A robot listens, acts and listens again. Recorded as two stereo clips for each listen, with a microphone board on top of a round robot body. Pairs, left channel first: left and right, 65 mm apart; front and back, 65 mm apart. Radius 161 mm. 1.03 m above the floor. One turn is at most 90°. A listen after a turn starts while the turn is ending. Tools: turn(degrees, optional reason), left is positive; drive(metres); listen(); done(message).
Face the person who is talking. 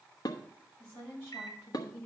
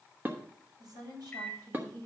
turn(degrees=90, reason="The woman speaking: 150° left.")
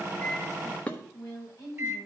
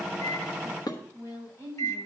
turn(degrees=50, reason="The woman speaking is now 50° left.")
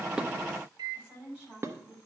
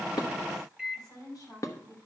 turn(degrees=-15, reason="The woman speaking is now 15° right.")
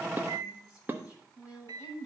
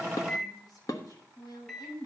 done("Found it: a woman speaking, straight ahead, over 4 m away.")